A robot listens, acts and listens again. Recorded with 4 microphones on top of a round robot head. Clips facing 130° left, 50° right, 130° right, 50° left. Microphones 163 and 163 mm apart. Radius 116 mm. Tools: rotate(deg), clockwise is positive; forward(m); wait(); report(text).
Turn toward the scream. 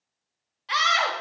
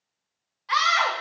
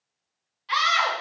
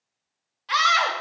rotate(-75)
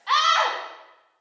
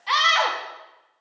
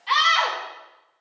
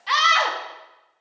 rotate(-25)
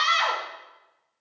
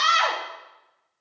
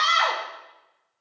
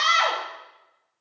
rotate(15)
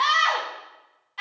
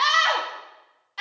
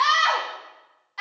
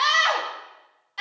rotate(10)
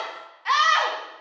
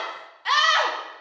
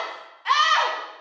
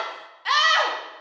report("Found it: a scream, straight ahead.")